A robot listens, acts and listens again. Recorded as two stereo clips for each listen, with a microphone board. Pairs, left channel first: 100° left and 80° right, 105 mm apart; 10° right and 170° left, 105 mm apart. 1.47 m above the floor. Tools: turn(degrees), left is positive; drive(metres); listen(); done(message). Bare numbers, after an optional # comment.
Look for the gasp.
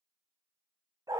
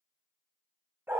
listen()
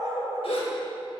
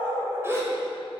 # The gasp: 105° left.
turn(105)
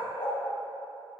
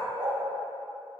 done("Facing where the gasp came from. I can't hear it now.")